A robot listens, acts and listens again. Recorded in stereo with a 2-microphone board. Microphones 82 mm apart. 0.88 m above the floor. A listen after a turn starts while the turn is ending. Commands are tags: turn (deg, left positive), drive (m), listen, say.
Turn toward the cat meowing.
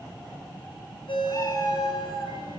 <turn deg="35"/>
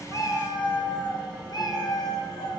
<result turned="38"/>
<turn deg="130"/>
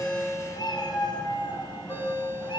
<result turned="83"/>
<turn deg="65"/>
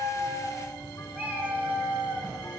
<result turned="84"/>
<turn deg="-20"/>
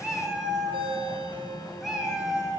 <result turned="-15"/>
<say>Found it: a cat meowing, straight ahead, over 4 m away.</say>